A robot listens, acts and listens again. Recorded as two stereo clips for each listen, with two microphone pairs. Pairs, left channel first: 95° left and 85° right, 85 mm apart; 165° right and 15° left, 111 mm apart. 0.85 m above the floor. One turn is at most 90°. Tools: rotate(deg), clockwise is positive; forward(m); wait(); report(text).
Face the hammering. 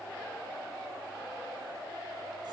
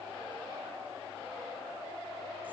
wait()
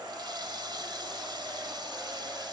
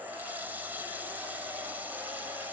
wait()
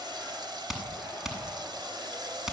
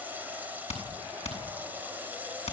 rotate(90)
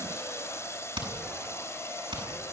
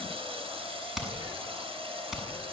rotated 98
rotate(70)
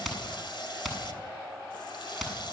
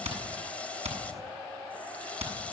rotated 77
report("Facing the hammering, over 4 m away.")